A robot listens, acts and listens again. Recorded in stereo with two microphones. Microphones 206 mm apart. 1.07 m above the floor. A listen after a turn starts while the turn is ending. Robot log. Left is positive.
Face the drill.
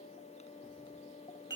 cmd idle
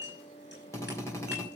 cmd yaw +30
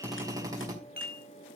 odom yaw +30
note: So it is at 15° right.
cmd yaw -15
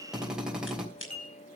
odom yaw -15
end: Found it: a drill, straight ahead, 2 to 4 m away.